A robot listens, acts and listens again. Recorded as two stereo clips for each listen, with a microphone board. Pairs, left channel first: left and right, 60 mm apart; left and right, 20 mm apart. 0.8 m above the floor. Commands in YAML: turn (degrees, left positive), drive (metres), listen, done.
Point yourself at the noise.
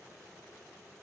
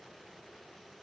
listen: true
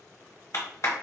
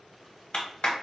turn: 50
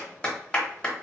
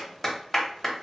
turn: 15
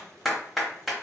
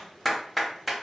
done: "Facing the clap, 1 to 2 m away."